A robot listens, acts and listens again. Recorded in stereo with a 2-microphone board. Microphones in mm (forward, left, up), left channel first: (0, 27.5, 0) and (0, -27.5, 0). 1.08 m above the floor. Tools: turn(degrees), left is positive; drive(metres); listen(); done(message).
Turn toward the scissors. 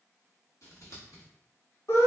turn(degrees=65)
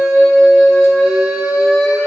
listen()
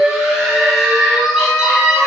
listen()
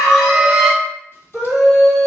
done("I heard scissors, but can't make it out now. It was about straight ahead or 50° left.")